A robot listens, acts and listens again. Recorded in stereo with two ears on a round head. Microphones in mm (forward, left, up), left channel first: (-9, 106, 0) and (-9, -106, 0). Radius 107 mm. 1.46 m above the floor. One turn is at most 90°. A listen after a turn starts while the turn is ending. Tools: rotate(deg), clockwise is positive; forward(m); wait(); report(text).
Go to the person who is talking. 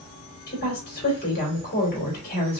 rotate(-40)
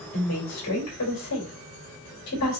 rotate(-90)
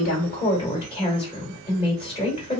rotate(-25)
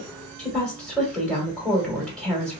forward(1.0)
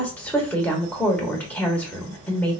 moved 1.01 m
forward(1.0)
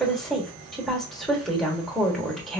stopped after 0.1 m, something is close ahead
report("I am next to the woman speaking.")